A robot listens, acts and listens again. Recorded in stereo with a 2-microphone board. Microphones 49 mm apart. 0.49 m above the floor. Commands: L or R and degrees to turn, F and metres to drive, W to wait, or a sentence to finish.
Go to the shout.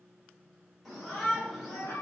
L30
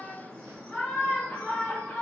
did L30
L155
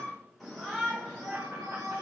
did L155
F1.0
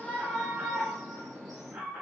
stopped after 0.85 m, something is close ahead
I am next to the shout.